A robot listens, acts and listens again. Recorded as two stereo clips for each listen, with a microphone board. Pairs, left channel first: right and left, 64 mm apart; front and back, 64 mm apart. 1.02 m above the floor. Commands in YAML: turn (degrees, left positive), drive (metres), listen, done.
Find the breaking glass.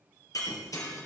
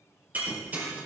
turn: -120
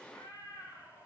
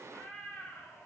done: "I heard breaking glass from this way, but can't make it out now."